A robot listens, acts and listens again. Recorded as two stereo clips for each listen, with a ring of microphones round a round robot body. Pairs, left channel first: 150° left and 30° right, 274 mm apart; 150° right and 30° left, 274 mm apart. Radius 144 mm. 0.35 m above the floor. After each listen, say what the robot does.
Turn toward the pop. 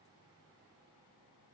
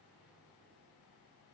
Keep listening.
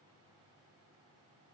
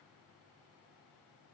Keep listening.
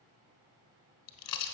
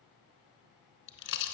Turn 160° left.
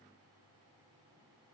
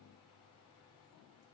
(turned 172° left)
Turn 10° right.
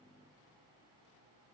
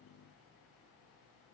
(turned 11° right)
I heard a pop from this way, but can't make it out now.